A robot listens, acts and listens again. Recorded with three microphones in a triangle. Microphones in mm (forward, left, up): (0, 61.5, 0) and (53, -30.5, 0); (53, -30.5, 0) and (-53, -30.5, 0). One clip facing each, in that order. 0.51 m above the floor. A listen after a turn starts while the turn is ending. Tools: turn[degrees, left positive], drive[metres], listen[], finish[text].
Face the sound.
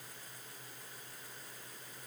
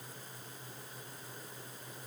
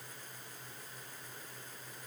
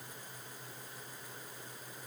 Action: listen[]
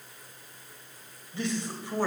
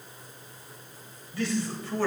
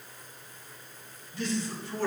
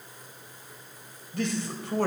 Thought: The man speaking: 170° right.
Action: turn[-170]
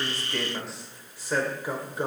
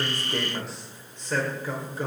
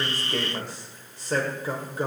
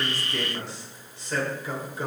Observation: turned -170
Thought: The man speaking is now 55° left.
Action: turn[55]
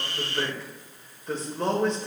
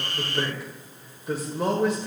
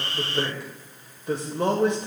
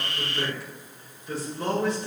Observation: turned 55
Thought: The man speaking is now 20° left.
Action: turn[20]
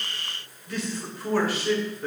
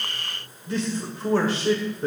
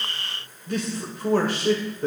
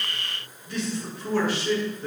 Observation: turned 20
Action: finish[Facing the man speaking.]